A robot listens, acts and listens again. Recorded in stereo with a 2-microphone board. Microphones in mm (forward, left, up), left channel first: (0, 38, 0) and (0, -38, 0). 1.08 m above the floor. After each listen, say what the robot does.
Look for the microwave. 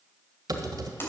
Keep listening.
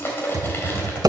Keep listening.
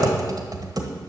I can't make out a microwave to turn to.